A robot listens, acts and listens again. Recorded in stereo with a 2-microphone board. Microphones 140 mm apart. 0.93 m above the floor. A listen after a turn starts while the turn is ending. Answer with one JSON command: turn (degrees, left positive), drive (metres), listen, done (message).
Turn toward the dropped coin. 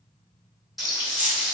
{"turn": -70}
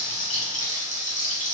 {"listen": true}
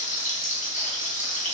{"done": "I heard a dropped coin, but can't make it out now. It was about straight ahead or 40° right."}